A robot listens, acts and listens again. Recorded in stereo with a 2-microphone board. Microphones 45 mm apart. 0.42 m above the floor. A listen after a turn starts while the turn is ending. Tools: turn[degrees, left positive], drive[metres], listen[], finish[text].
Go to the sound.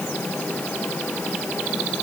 Action: listen[]
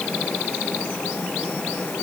Action: listen[]
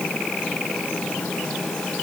Action: finish[I can't make out anything to turn to.]